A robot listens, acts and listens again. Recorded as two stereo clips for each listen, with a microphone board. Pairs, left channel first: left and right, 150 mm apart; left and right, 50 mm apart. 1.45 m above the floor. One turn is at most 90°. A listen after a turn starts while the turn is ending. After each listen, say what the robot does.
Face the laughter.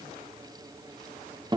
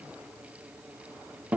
Keep listening.
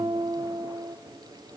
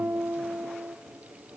Keep listening.
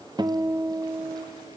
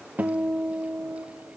I can't make out laughter to turn to.